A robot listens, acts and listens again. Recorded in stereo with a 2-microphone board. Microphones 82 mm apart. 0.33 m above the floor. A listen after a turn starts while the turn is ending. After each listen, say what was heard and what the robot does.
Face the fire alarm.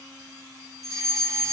The fire alarm: about 40° right or 140° right. Turn 40° right.
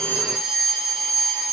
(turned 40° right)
Found it: a fire alarm, straight ahead, over 4 m away.